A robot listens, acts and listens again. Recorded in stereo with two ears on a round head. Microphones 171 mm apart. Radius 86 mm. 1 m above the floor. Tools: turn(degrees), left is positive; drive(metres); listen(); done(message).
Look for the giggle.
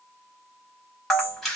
listen()
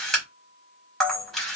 listen()
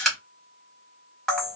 done("I can't make out a giggle, only a camera shutter.")